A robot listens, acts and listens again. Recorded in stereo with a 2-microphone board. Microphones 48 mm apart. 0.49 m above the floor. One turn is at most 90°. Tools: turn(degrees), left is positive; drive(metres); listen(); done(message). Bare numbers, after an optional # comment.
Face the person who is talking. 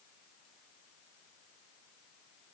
listen()
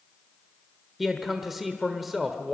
turn(-30)
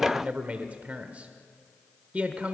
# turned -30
# So it is at 145° right.
turn(-90)
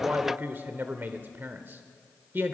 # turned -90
# The man speaking is now 55° right.
turn(-55)
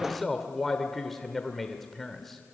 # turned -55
done("Found it: a man speaking, straight ahead, 1 to 2 m away.")